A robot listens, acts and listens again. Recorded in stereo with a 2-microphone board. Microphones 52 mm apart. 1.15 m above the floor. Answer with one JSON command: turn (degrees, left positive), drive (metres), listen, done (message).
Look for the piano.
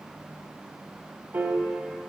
{"turn": -40}
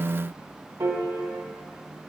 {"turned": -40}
{"turn": -95}
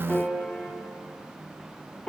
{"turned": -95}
{"turn": 20}
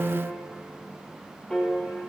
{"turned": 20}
{"done": "Facing the piano."}